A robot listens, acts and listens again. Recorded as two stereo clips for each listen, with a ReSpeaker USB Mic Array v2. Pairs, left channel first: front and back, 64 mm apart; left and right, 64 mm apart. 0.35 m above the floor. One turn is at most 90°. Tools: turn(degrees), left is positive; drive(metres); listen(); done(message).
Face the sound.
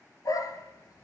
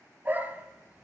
turn(degrees=-25)
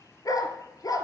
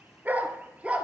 turn(degrees=-20)
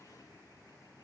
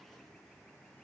listen()
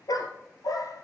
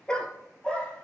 turn(degrees=15)
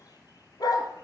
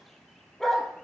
done("Facing the dog barking.")